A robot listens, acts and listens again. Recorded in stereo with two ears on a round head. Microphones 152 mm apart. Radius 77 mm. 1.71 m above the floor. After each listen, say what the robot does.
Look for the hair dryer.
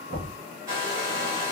Turn 20° right.
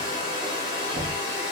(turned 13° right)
Found it: a hair dryer, straight ahead, 1 to 2 m away.